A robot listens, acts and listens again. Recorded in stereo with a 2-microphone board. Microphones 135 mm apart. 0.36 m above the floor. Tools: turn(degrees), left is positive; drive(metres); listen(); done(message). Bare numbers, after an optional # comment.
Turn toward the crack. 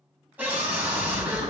# The crack: about 45° right or 135° right.
turn(-45)
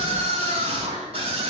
listen()
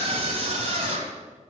done("I heard a crack, but can't make it out now. It was about straight ahead or 90° right.")